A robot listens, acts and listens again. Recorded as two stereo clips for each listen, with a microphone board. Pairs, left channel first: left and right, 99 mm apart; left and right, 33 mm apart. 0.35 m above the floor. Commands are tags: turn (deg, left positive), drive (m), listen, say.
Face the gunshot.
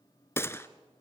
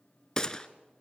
<turn deg="25"/>
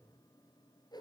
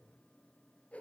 <listen/>
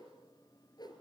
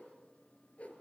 <say>I heard a gunshot, but can't make it out now. It was about straight ahead or 130° left.</say>